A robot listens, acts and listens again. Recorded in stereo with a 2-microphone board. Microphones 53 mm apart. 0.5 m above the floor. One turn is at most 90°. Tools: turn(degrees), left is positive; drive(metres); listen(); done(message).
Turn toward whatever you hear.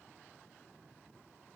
listen()
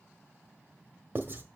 turn(degrees=-40)
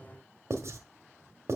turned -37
turn(degrees=-90)
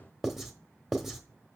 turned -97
done("Found it: writing, straight ahead, 1 to 2 m away.")